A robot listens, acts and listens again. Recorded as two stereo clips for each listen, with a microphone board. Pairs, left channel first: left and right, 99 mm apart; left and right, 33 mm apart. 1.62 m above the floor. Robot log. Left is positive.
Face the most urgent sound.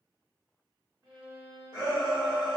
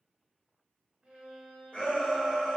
note: The shout: about 50° left or 130° left.
cmd yaw +50
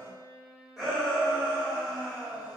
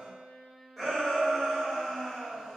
end: Found it: a shout, straight ahead.